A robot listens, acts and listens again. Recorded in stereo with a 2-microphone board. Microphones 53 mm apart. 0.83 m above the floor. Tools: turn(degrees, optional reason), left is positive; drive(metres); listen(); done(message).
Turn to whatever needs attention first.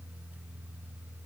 listen()
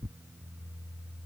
listen()
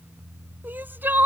turn(degrees=-40, reason="The crying: about 40° right or 140° right.")
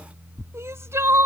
turn(degrees=-95, reason="So it is at 95° right.")
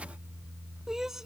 turn(degrees=-10, reason="The crying is now 10° right.")
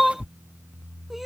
done("Facing the crying.")